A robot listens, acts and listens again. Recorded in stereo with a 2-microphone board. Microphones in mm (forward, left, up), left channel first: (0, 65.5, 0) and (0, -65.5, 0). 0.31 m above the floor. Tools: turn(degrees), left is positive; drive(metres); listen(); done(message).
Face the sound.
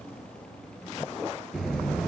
turn(degrees=30)
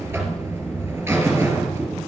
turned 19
turn(degrees=-15)
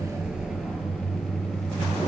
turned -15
done("Facing the buzzer, 2 to 4 m away.")